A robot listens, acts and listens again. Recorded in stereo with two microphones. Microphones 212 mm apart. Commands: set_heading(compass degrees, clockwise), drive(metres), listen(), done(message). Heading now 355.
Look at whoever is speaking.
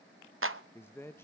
set_heading(325)
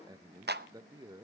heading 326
set_heading(346)
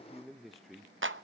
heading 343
done("Found it: a man speaking, straight ahead.")